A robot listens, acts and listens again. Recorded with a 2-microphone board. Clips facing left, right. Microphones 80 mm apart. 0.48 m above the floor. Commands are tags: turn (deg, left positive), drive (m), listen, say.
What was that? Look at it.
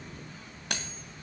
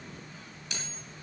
<turn deg="65"/>
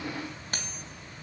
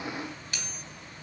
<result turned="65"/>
<turn deg="45"/>
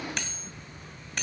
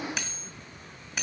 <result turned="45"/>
<say>Found it: cutlery clinking, straight ahead.</say>